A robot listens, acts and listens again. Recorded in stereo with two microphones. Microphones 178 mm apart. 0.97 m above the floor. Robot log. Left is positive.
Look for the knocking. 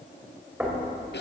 cmd yaw -30
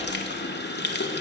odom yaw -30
cmd idle
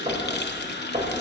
note: So it is at 135° right.
cmd yaw -135
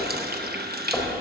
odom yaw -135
end: Facing the knocking, 2 to 4 m away.